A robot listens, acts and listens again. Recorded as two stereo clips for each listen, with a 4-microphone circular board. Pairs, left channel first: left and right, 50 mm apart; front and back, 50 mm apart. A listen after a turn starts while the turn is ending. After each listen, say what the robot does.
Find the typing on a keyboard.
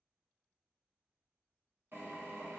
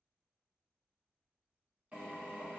Keep listening.
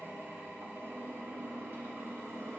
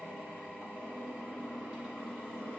Keep listening.
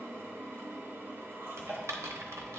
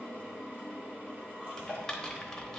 Turn 80° right.
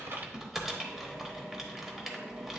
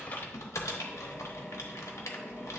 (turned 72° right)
Turn 10° right.
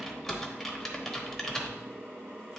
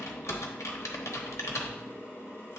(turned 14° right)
Found it: typing on a keyboard, straight ahead, 1 to 2 m away.